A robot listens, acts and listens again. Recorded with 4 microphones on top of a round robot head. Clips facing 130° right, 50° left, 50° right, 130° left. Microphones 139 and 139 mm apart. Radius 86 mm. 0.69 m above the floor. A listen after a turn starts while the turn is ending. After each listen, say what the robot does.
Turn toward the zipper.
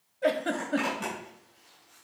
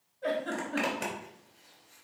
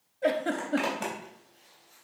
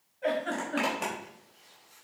Turn 45° left.
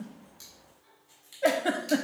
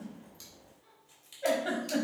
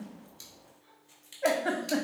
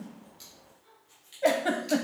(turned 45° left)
Keep listening.
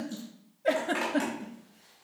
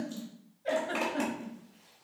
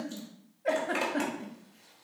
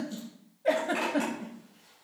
Turn 15° right.
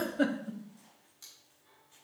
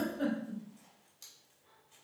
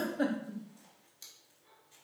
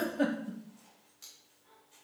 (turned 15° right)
Keep listening.
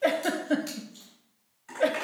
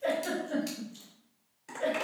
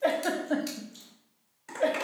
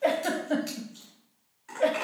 Found it: a zipper, straight ahead, 2 to 4 m away.